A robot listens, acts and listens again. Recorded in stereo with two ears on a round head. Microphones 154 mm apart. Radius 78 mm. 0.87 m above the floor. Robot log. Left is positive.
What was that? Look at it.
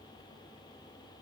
cmd idle
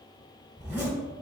cmd yaw -30
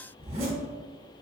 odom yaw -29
note: So it is at 140° right.
cmd yaw -140
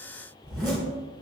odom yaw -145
end: Found it: a zipper, straight ahead.